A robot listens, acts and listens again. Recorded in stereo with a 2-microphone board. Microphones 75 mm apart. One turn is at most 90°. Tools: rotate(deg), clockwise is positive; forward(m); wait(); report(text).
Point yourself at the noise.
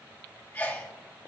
rotate(-30)
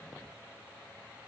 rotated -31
wait()
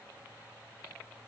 report("I heard a sneeze, but can't make it out now. It was about straight ahead or 120° left.")